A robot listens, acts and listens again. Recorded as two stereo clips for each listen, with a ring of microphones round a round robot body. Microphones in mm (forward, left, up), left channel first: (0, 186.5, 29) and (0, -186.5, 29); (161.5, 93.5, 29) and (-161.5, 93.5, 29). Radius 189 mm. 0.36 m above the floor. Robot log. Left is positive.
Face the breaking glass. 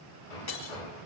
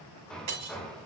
note: The breaking glass: 140° left.
cmd yaw +140
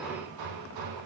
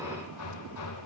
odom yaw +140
end: I heard breaking glass from this way, but can't make it out now.